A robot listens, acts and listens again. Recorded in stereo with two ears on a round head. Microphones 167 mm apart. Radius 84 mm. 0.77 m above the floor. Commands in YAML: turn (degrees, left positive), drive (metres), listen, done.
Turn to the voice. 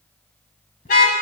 listen: true
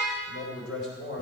turn: 70
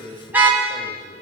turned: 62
turn: 40
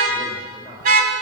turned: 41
done: "Found it: a man speaking, straight ahead."